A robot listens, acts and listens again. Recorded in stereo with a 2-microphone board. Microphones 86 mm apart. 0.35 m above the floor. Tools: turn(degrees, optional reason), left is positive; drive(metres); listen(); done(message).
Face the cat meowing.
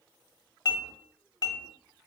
listen()
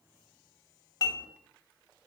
listen()
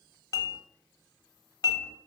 done("I can't make out a cat meowing to turn to.")